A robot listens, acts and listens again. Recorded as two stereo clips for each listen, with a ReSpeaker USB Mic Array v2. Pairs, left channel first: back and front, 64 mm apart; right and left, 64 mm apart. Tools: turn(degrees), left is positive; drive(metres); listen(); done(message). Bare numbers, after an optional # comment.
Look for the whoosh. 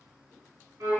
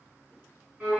listen()
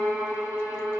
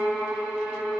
listen()
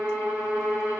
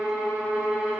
done("I can't make out a whoosh, only a violin.")